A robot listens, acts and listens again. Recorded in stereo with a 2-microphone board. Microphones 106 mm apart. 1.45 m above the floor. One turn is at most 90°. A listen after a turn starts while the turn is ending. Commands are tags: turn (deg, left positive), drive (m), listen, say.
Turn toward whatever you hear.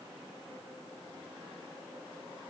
<listen/>
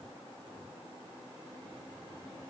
<listen/>
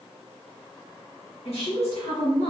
<turn deg="90"/>
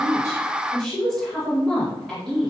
<say>Facing the woman speaking, 1 to 2 m away.</say>